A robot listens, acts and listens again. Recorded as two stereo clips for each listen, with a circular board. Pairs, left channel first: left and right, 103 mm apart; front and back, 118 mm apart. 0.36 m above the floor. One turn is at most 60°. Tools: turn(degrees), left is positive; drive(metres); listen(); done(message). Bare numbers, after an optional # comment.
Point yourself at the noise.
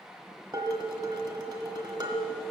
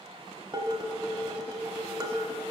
# The dishes clattering: 135° right.
turn(-60)
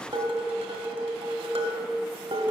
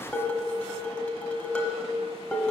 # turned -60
# The dishes clattering is now 80° right.
turn(-60)
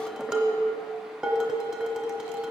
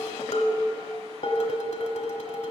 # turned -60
# The dishes clattering is now 10° right.
turn(-10)
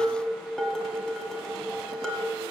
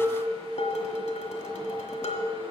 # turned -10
done("Found it: dishes clattering, straight ahead.")